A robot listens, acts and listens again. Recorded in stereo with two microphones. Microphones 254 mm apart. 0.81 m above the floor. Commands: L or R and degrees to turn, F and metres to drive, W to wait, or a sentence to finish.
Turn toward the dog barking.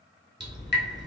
W
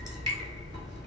W
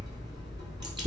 I can't make out a dog barking, only dripping.